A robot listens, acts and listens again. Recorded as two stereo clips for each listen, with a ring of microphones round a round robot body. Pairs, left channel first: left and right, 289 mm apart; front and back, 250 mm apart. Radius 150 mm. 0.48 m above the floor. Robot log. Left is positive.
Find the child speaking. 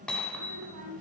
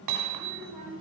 note: The child speaking: 115° right.
cmd yaw -115
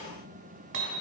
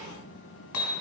cmd idle
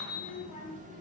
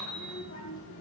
note: The child speaking is now 20° left.
cmd yaw +20
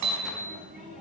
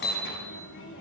cmd idle
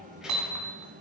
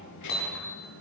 end: Found it: a child speaking, straight ahead, over 4 m away.